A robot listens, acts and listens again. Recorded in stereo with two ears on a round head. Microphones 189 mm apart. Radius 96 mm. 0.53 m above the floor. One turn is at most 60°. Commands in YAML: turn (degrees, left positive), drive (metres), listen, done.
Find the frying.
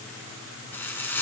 turn: 30
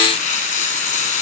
turn: 60
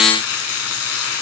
turn: 60
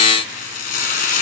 turn: 40
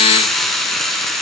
done: "Facing the frying, 1 to 2 m away."